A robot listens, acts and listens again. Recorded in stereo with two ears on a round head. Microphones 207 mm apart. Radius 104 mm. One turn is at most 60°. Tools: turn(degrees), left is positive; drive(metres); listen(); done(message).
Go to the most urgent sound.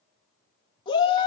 turn(degrees=20)
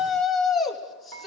drive(metres=1.0)
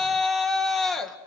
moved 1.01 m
drive(metres=1.0)
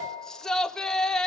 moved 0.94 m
drive(metres=1.0)
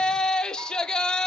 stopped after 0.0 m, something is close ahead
done("I am next to the shout.")